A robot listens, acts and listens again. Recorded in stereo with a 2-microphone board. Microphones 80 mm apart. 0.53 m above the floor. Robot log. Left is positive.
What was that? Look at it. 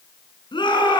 cmd yaw +90
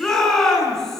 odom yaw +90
end: Facing the shout, over 4 m away.